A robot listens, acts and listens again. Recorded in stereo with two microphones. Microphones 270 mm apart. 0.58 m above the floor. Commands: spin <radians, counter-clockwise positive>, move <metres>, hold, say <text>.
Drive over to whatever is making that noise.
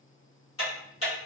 spin 1.05
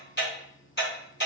spin 0.87
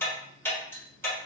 spin 0.17
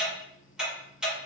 move 1.0
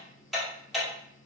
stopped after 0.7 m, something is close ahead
say Arrived at the ticking, straight ahead.